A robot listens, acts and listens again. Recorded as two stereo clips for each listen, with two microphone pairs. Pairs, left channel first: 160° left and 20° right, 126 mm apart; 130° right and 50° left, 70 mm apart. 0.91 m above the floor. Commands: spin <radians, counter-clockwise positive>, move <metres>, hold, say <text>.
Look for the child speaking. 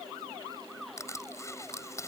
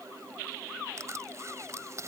hold
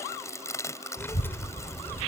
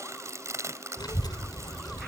spin -2.27
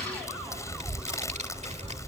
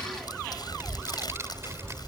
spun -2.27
say Found it: a child speaking, straight ahead.